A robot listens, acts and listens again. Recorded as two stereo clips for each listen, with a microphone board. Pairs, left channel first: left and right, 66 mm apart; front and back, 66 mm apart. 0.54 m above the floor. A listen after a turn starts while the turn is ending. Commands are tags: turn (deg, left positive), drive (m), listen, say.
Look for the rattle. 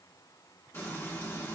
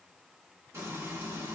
<listen/>
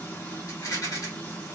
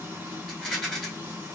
<turn deg="90"/>
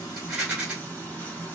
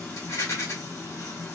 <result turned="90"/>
<turn deg="-15"/>
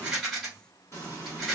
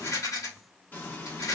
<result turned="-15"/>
<say>Facing the rattle.</say>